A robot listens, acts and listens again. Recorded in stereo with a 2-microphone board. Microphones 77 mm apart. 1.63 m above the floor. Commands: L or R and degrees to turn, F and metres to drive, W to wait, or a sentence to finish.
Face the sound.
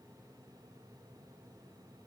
W
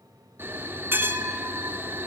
R30
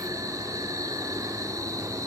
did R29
R115
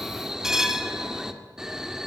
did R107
R10
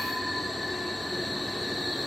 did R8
Facing the bell, 2 to 4 m away.